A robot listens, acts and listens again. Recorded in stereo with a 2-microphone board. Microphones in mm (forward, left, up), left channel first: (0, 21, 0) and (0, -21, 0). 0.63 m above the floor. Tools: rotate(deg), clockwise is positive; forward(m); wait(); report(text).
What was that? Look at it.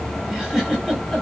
rotate(30)
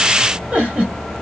rotate(145)
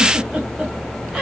wait()
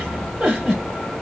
rotate(25)
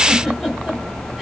wait()
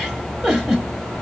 report("Found it: a giggle, straight ahead, 1 to 2 m away.")